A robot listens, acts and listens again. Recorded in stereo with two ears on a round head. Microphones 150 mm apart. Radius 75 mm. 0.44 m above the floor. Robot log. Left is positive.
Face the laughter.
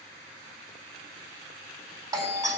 cmd idle
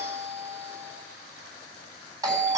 cmd idle
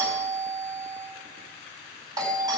end: I can't make out laughter, only a doorbell.